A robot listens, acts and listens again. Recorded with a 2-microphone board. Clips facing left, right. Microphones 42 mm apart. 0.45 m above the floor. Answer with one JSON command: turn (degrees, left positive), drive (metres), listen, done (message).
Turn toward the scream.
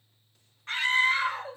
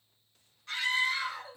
{"turn": 35}
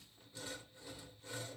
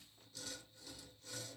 {"listen": true}
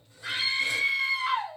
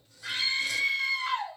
{"turn": 10}
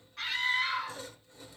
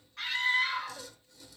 {"done": "Found it: a scream, straight ahead, 1 to 2 m away."}